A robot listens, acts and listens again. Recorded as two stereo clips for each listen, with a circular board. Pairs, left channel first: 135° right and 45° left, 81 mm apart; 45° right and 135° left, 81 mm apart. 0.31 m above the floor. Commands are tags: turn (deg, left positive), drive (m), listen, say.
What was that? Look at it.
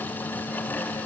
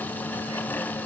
<listen/>
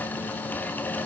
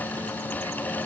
<listen/>
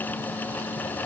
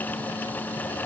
<say>I can't make out anything to turn to.</say>